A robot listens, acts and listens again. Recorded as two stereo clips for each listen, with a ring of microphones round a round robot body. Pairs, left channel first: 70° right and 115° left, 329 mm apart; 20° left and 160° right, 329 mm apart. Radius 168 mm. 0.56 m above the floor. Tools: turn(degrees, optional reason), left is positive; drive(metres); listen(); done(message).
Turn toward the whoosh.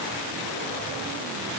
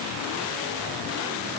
listen()
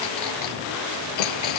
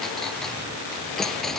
listen()
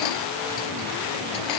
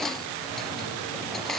done("I can't make out a whoosh, only a clink.")